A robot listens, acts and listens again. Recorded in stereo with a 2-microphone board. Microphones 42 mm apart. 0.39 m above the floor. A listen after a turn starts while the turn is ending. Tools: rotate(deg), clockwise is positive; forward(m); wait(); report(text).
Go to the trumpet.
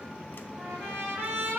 rotate(75)
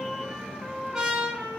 rotate(20)
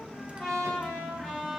forward(1.0)
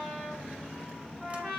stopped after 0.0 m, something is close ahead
report("Something is in my way. I am facing the trumpet but have not reached it.")